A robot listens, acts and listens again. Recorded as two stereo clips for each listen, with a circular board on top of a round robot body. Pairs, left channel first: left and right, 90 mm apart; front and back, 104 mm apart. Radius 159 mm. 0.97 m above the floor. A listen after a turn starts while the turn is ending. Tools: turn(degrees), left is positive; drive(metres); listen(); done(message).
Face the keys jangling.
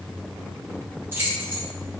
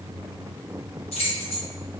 turn(degrees=-25)
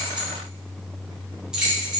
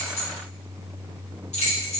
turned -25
turn(degrees=-10)
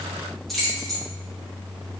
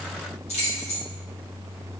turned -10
done("Facing the keys jangling.")